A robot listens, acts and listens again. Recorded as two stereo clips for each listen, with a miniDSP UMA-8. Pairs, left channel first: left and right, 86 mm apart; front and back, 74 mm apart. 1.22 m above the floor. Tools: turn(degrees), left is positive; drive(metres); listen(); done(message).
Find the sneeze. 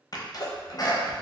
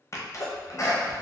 turn(degrees=50)
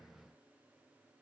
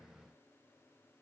done("Facing where the sneeze came from. I can't hear it now.")